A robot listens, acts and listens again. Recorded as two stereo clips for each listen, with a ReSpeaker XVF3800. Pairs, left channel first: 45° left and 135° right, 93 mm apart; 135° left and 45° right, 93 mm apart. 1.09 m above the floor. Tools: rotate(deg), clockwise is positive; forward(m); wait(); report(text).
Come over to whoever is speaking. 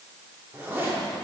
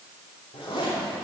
wait()
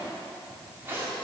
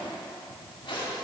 wait()
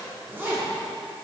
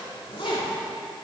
report("I can't make out anyone speaking to turn to.")